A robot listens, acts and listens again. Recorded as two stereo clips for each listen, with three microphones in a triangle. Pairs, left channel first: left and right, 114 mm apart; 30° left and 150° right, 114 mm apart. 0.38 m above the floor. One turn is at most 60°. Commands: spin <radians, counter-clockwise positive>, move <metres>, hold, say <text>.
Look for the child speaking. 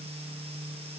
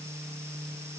hold
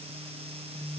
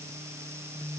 hold
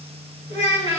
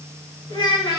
spin 1.05
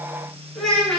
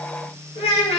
say Found it: a child speaking, straight ahead, 2 to 4 m away.